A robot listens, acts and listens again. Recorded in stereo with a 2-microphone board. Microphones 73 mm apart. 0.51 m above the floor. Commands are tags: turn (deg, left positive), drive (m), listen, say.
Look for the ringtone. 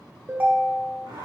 <turn deg="-25"/>
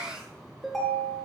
<say>Found it: a ringtone, straight ahead, 1 to 2 m away.</say>